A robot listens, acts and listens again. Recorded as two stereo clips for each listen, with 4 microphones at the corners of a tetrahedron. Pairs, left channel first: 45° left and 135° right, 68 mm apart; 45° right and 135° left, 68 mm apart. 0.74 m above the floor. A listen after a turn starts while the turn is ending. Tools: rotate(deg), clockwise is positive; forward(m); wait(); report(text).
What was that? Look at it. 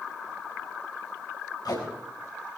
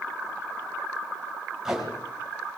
rotate(-55)
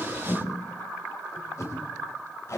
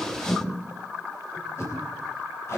report("Found it: tape being pulled, straight ahead.")